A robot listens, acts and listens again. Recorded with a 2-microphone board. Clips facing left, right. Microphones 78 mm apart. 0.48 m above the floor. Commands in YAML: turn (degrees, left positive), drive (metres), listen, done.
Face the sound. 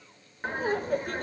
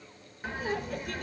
turn: 40
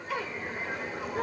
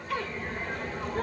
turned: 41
done: "Facing the laughter, 1 to 2 m away."